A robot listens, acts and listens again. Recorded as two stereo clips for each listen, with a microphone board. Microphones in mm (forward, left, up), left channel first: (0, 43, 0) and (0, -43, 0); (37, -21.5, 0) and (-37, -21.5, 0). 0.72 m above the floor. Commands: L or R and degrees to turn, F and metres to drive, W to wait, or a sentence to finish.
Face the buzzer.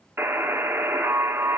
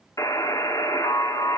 R35
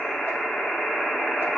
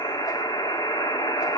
Found it: a buzzer, straight ahead, 1 to 2 m away.